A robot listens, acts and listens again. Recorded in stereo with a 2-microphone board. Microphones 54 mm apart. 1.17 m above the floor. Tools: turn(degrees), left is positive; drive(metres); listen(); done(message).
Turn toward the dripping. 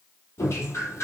turn(degrees=55)
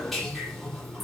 done("Facing the dripping.")